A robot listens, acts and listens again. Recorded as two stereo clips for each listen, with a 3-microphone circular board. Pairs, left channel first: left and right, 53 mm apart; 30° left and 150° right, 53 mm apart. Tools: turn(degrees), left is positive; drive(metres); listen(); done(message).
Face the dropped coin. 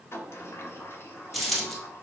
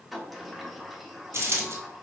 turn(degrees=180)
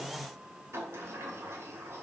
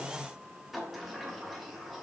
done("I heard a dropped coin from this way, but can't make it out now.")